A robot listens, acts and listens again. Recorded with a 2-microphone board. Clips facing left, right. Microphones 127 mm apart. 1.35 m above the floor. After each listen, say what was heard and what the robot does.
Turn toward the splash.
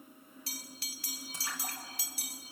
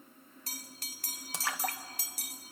Turn 90° right.
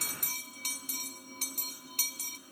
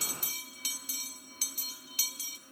Facing where the splash came from. I can't hear it now.